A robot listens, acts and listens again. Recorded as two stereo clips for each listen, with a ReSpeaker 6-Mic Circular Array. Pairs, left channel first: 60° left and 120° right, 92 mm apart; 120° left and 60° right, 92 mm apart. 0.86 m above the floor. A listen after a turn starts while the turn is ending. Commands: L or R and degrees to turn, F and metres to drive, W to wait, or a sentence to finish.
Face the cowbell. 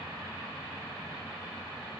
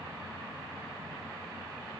W
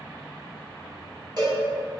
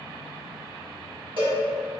R80
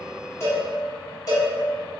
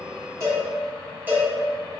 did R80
L10
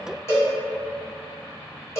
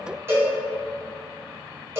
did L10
Found it: a cowbell, straight ahead, 1 to 2 m away.